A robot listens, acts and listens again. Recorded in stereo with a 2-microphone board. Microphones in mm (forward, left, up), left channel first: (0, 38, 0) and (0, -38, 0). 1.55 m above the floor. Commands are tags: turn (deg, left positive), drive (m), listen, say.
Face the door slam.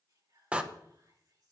<turn deg="-15"/>
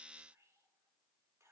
<listen/>
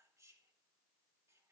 <say>I heard a door slam, but can't make it out now. It was about straight ahead or 150° right.</say>